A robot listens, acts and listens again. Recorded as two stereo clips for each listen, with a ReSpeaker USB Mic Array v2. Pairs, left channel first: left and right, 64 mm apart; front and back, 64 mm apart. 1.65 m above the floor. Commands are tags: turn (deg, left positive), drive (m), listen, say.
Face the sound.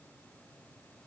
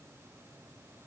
<listen/>
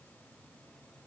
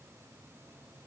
<listen/>
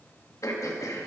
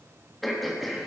<turn deg="90"/>
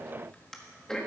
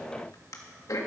<turn deg="10"/>
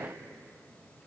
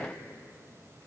<listen/>
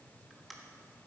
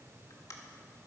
<say>Facing the throat clearing.</say>